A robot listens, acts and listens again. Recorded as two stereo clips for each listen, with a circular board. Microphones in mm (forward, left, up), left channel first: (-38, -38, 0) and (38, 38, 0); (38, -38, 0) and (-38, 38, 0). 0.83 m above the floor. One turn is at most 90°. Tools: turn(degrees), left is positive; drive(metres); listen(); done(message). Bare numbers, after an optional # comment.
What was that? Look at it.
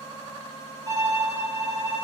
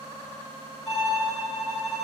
# The violin: 20° right.
turn(-20)
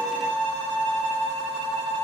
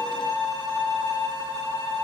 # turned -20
done("Found it: a violin, straight ahead, 1 to 2 m away.")